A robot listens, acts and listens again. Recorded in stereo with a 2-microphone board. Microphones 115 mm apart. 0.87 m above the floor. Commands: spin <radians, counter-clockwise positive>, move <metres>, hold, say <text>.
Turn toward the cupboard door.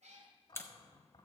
spin 0.70
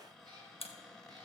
say Found it: a cupboard door, straight ahead, 2 to 4 m away.